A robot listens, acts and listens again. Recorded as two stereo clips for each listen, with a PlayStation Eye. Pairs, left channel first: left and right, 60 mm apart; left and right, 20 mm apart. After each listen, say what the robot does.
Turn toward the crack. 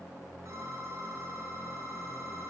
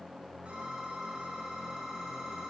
Keep listening.
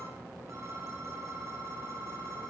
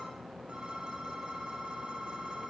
Keep listening.
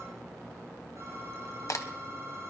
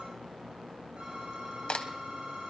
Turn 65° left.
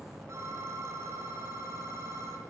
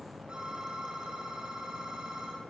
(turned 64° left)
Keep listening.
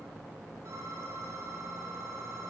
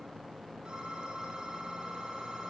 I heard a crack, but can't make it out now. It was about straight ahead or 50° left.